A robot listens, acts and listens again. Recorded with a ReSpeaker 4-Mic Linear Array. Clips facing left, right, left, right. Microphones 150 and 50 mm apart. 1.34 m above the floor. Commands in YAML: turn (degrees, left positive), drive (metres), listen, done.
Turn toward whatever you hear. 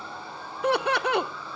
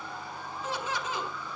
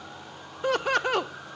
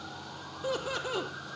turn: 70
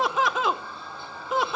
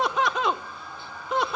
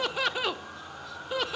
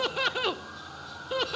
done: "Found it: laughter, straight ahead, under 1 m away."